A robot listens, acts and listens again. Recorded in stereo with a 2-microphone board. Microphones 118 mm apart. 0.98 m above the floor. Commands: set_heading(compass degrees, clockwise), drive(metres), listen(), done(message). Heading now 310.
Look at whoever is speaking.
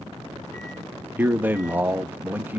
set_heading(325)
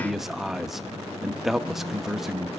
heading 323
done("Facing the man speaking, 1 to 2 m away.")